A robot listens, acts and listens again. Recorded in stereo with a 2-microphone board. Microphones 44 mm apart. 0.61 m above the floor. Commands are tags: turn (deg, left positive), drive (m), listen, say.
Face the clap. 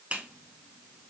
<turn deg="-30"/>
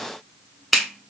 <say>Found it: a clap, straight ahead, 1 to 2 m away.</say>